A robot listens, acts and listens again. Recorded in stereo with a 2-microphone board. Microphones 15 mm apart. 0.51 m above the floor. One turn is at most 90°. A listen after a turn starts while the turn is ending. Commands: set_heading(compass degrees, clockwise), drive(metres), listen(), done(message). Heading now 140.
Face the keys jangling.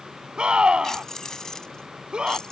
set_heading(95)
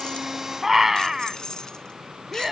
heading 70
set_heading(25)
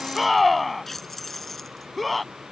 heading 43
set_heading(33)
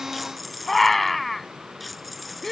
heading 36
done("Facing the keys jangling.")